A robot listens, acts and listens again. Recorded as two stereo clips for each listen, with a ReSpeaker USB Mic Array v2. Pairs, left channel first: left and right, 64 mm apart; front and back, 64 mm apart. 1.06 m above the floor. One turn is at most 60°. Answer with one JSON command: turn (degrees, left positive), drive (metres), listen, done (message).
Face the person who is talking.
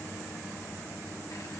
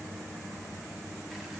{"listen": true}
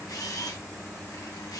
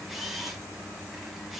{"listen": true}
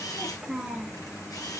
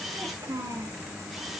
{"turn": -60}
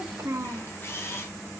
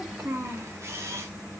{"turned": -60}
{"turn": -60}
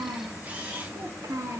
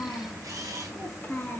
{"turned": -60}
{"turn": -60}
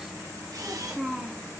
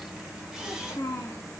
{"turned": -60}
{"done": "Facing the child speaking."}